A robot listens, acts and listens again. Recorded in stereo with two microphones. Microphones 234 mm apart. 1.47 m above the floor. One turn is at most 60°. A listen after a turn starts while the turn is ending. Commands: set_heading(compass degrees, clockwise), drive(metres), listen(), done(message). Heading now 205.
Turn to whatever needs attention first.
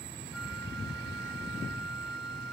listen()
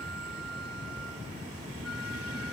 listen()
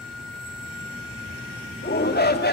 set_heading(165)
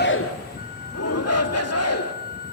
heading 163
set_heading(103)
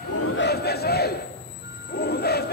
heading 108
set_heading(68)
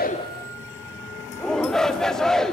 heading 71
done("Facing the shout.")